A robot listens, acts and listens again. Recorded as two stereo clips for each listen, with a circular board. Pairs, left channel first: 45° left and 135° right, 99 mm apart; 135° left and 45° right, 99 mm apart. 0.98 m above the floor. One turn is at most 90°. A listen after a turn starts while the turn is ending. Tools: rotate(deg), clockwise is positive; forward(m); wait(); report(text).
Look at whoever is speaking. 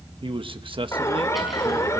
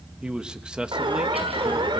rotate(90)
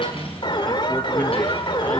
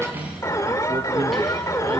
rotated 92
rotate(30)
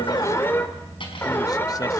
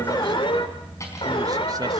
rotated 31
wait()
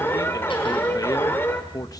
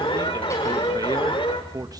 report("Facing the man speaking.")